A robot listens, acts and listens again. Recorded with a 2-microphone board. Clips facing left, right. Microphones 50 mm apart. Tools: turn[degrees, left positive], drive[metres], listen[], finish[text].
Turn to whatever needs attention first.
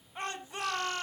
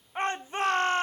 Thought: The shout: about 35° right or 145° right.
Action: turn[-35]
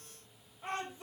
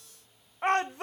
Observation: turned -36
Thought: So it is at 105° right.
Action: turn[-105]
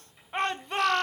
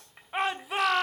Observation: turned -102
Action: finish[Found it: a shout, straight ahead.]